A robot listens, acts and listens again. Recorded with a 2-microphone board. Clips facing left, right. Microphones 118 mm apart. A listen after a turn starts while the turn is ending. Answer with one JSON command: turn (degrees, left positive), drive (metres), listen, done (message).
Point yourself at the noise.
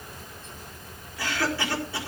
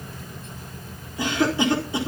{"turn": -20}
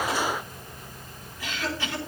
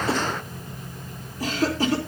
{"turn": -140}
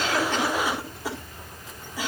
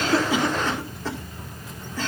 {"turn": 10}
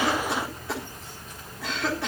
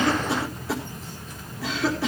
{"done": "Found it: a cough, straight ahead."}